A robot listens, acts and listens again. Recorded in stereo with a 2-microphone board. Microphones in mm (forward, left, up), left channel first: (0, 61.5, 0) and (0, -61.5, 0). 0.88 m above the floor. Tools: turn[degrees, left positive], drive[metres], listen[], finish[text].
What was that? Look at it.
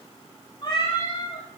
Thought: The cat meowing: about 45° left or 135° left.
Action: turn[45]
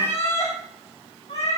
Thought: So it is at 100° left.
Action: turn[100]
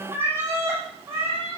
Thought: The cat meowing is now 25° right.
Action: turn[-25]
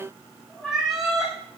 Action: finish[Facing the cat meowing.]